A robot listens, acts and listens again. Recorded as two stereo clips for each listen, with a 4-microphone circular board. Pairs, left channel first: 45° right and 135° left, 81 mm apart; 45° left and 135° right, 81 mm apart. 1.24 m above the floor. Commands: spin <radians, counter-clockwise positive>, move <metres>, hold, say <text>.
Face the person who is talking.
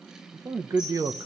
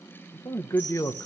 spin 1.66
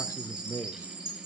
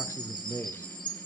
say Facing the man speaking, under 1 m away.